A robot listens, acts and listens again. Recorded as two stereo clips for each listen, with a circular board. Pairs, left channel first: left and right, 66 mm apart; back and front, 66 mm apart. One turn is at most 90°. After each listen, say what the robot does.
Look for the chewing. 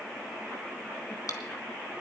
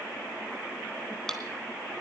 Turn 90° left.
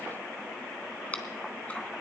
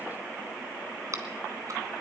Turn 25° left.
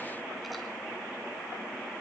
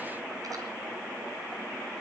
Keep listening.
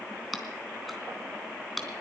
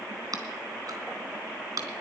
Facing the chewing.